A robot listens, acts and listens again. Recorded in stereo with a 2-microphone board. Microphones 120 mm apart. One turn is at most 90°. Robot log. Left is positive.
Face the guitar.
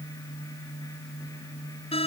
cmd idle
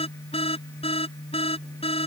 cmd idle
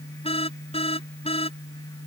end: I can't make out a guitar to turn to.